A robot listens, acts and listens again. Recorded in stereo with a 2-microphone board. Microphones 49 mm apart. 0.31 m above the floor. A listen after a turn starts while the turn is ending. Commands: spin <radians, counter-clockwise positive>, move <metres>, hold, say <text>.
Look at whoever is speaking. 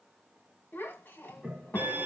spin 0.79
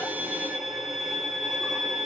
hold
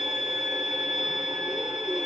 hold
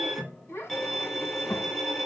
spin 1.48
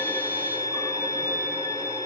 hold
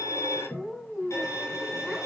say Found it: a child speaking, straight ahead, 1 to 2 m away.